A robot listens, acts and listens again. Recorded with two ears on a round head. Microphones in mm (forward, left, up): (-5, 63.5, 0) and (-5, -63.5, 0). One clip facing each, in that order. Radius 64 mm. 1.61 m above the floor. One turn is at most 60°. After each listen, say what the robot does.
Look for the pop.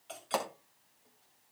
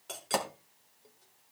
Turn 15° right.
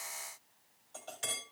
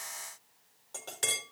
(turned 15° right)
Keep listening.
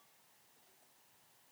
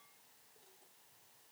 I heard a pop, but can't make it out now. It was about straight ahead or 150° right.